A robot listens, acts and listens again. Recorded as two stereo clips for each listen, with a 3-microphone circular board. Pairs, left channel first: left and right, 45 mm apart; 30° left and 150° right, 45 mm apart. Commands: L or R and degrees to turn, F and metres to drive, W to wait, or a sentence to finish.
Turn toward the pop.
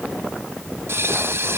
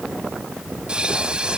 R80
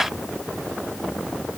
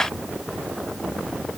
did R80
Facing where the pop came from. I can't hear it now.